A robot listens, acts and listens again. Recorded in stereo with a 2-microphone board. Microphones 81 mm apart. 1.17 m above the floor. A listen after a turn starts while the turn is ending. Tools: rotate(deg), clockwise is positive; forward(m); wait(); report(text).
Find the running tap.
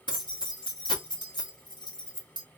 wait()
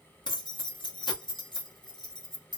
wait()
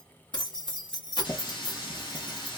rotate(-75)
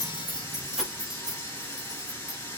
rotate(-35)
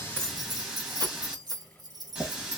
rotate(15)
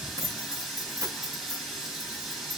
report("Facing the running tap.")